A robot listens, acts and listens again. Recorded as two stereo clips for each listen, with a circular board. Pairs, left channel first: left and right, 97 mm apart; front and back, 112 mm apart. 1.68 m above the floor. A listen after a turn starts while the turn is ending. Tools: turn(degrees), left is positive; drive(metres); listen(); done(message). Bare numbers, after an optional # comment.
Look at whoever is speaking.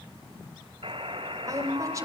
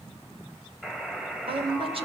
# The woman speaking: 145° right.
turn(-145)
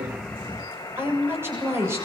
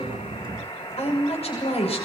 # The woman speaking is now 25° right.
turn(-25)
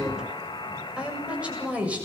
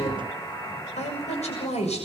# The woman speaking is now 15° right.
turn(-15)
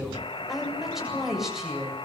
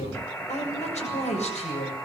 done("Found it: a woman speaking, straight ahead.")